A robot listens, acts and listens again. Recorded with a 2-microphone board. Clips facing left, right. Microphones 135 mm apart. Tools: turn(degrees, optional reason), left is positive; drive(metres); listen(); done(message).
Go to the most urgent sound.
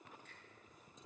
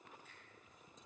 listen()
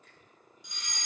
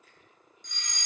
turn(degrees=30)
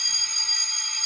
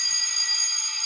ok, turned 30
turn(degrees=-20, reason="So it is at 20° right.")
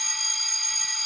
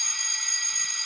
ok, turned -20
drive(metres=1.0)
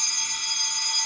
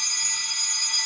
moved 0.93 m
drive(metres=1.0)
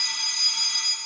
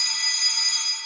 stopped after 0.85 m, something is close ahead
turn(degrees=15, reason="The fire alarm is now 15° left.")
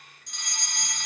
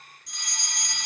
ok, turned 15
done("I am next to the fire alarm.")